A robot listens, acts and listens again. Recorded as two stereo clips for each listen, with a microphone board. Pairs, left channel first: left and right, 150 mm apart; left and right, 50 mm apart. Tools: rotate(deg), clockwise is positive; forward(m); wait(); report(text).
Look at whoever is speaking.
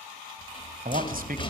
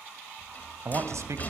rotate(70)
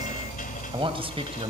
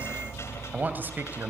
rotate(40)
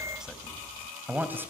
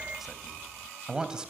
rotate(15)
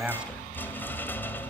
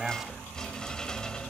report("Facing the man speaking.")